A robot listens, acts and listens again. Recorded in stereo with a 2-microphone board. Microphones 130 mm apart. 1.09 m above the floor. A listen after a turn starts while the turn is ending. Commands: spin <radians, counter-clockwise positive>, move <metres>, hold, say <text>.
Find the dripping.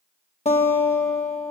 hold
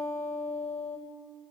hold
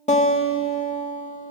say I can't make out dripping to turn to.